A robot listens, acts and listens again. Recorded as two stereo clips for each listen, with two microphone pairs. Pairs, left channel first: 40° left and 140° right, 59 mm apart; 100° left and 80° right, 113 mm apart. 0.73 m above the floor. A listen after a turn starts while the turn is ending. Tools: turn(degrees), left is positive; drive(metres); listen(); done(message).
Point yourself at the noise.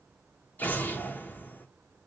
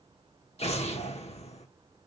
turn(degrees=95)
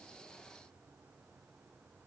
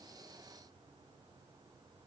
done("I heard an explosion from this way, but can't make it out now.")